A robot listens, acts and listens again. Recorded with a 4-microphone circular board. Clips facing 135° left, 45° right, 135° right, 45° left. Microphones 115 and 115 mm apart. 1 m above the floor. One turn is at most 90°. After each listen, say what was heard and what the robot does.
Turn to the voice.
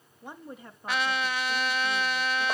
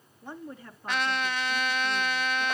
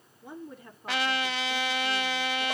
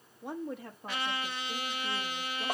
The woman speaking: 65° left. Turn 65° left.
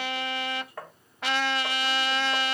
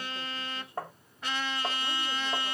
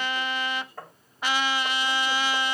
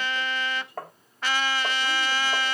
Keep listening.
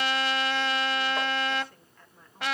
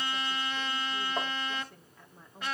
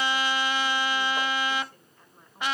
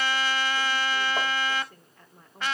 The woman speaking is now 35° left. Turn 35° left.
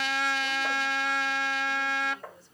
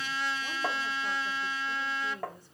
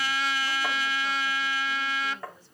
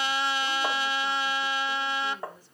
Keep listening.
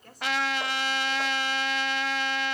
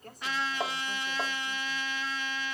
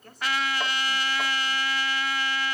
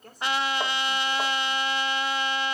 Facing the woman speaking.